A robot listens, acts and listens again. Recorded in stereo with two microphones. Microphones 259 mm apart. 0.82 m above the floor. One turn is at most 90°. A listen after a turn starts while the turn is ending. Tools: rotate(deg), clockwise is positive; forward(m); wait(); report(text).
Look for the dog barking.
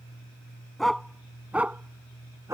rotate(30)
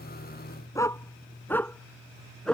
report("Facing the dog barking.")